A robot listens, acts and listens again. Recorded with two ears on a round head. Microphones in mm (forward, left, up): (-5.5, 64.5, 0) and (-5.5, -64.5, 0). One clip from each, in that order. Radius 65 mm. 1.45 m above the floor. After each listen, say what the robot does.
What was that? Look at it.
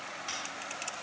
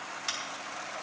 Turn 40° right.
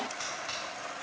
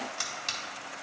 Turn 100° right.
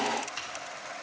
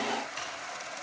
Keep listening.
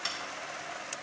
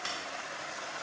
Turn 20° left.
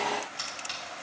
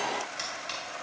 Facing the scissors.